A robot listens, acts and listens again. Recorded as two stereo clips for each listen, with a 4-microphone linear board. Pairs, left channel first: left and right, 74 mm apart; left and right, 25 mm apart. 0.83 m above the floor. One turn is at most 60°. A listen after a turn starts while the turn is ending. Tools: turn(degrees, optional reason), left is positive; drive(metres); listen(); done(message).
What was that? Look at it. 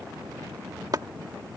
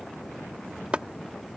turn(degrees=-55, reason="The chopping: about 55° right or 125° right.")
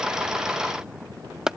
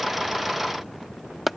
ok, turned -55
turn(degrees=-10, reason="So it is at 10° right.")
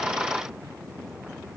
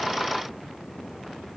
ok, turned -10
listen()
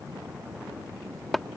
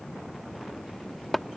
done("Facing the chopping.")